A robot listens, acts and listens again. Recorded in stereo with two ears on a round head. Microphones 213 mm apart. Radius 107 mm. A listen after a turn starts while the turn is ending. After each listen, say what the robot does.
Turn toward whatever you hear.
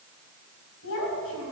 Turn 60° left.
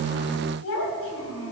Turn 55° left.
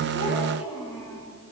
Turn 15° left.
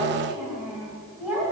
Facing the child speaking, 2 to 4 m away.